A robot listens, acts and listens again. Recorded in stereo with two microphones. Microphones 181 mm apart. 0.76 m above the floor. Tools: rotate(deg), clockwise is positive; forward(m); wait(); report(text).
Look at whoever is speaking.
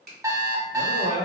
rotate(65)
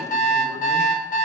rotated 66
wait()
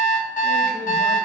wait()
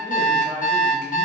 report("I heard a man speaking, but can't make it out now. It was about straight ahead or 50° right.")